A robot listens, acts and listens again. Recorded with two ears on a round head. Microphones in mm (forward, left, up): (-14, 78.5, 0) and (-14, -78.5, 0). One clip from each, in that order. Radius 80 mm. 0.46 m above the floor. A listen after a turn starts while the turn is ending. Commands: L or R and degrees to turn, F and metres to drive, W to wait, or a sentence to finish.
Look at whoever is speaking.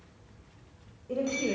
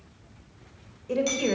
R50
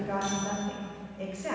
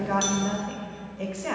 R15
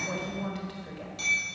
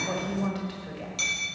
Found it: a woman speaking, straight ahead.